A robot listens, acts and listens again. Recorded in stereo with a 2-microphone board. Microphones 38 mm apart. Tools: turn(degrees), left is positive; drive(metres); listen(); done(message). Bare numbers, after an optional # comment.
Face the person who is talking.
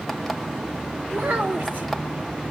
# The child speaking: about 55° right or 125° right.
turn(-55)
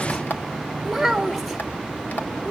done("Found it: a child speaking, straight ahead, 1 to 2 m away.")